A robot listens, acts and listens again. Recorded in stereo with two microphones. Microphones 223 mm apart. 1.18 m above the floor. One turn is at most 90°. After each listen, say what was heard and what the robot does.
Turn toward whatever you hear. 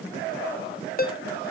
The ringtone: about 40° left or 140° left. Turn 40° left.
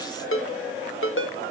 So it is at 95° left. Turn 90° left.
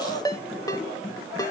The ringtone is now 20° left. Turn 20° left.
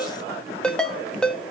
Found it: a ringtone, straight ahead, under 1 m away.